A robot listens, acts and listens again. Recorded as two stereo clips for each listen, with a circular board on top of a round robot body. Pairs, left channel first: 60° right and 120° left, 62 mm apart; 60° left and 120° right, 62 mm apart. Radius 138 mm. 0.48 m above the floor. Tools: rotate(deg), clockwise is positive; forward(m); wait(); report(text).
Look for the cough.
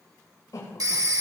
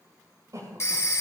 rotate(85)
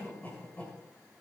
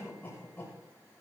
report("Found it: a cough, straight ahead, over 4 m away.")